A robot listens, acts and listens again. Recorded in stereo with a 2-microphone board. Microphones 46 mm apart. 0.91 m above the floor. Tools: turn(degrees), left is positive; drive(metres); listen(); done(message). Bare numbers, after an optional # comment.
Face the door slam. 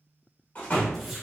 # The door slam: about 35° left or 145° left.
turn(35)
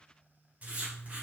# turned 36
listen()
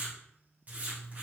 done("I heard a door slam, but can't make it out now. It was about 5° right or 110° left.")